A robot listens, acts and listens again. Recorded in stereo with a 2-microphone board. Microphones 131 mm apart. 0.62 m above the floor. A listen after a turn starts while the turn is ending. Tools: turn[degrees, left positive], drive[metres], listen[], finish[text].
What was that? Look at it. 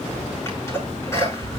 Thought: The sneeze: about 20° left or 160° left.
Action: turn[20]
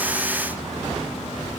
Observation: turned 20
Action: listen[]
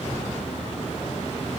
Action: finish[I heard a sneeze, but can't make it out now. It was about straight ahead or 140° left.]